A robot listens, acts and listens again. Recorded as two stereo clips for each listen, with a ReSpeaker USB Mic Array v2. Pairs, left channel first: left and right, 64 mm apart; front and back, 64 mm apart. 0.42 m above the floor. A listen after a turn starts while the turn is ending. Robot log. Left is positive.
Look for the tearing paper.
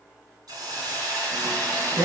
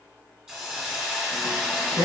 note: The tearing paper: 140° right.
cmd yaw -140
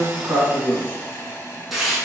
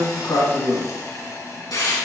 end: Facing the tearing paper, 2 to 4 m away.